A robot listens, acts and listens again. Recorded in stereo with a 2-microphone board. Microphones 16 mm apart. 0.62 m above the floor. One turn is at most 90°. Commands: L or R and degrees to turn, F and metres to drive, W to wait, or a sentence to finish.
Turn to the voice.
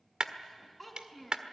L30
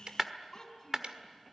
L90
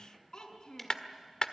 L50
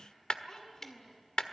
L40
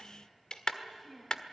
Found it: a child speaking, straight ahead.